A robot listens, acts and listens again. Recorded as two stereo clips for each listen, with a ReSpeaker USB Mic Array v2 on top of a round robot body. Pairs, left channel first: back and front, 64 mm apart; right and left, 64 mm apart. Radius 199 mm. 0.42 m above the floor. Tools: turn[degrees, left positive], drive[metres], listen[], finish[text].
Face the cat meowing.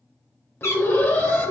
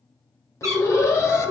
Thought: The cat meowing: 130° left.
Action: turn[130]
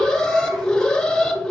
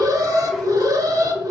Action: listen[]
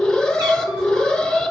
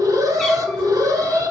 Action: listen[]
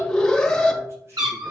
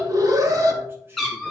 Action: finish[Found it: a cat meowing, straight ahead.]